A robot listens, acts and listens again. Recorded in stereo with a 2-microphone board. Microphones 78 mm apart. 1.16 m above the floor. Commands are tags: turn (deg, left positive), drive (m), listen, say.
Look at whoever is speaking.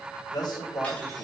<turn deg="60"/>
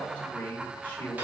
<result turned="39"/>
<turn deg="20"/>
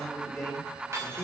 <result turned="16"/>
<say>Facing the man speaking, over 4 m away.</say>